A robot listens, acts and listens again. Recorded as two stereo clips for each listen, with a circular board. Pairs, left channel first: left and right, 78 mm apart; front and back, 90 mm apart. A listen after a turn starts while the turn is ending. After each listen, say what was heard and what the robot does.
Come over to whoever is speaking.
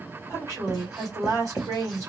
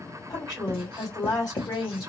The woman speaking: 45° right. Turn 45° right.
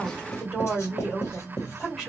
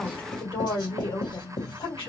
Drive 1.0 m forward.
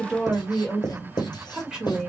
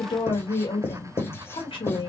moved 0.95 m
The woman speaking is now 10° right. Turn 10° right.
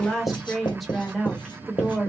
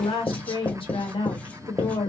Drive 1.0 m forward.
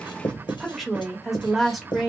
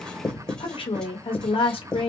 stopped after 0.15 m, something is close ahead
I am next to the woman speaking.